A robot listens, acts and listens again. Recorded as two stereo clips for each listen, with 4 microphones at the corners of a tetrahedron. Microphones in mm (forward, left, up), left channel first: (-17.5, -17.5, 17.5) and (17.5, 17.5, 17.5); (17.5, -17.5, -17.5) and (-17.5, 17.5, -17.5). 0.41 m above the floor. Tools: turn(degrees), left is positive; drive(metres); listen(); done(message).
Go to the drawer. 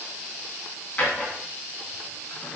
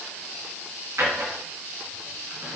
turn(degrees=160)
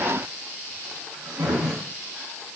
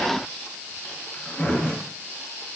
turn(degrees=15)
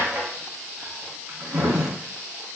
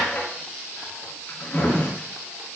drive(metres=1.0)
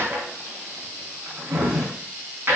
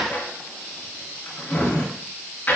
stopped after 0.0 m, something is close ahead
done("Something is in my way. I am facing the drawer but have not reached it.")